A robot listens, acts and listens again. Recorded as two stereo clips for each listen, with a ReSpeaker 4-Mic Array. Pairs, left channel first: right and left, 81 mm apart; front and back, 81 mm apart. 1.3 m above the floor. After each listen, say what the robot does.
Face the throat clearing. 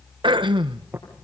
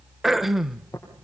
Turn 95° left.
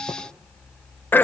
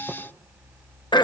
Turn 25° right.
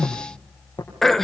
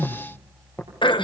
Facing the throat clearing.